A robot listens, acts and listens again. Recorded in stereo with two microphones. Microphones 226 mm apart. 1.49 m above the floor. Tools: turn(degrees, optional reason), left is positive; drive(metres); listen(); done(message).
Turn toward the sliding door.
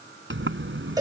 turn(degrees=-60, reason="The sliding door: about 60° right or 120° right.")
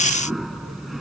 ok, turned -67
done("Found it: a sliding door, straight ahead.")